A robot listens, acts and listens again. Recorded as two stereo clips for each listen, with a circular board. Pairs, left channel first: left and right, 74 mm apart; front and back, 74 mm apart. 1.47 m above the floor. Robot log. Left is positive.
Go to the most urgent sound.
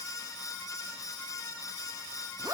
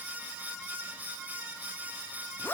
cmd idle
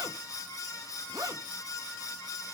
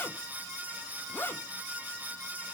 cmd idle
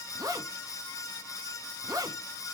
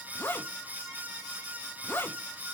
end: I can't make out anything urgent, only a zipper.